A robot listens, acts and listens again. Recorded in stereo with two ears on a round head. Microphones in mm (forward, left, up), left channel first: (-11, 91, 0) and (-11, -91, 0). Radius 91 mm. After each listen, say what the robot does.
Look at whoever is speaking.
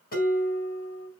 Keep listening.
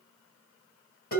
Keep listening.
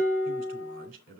Turn 45° right.
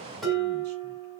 Keep listening.
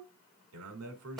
Turn 90° right.
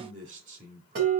Turn 35° right.
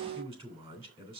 Turn 25° right.
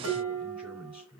Facing the man speaking, 2 to 4 m away.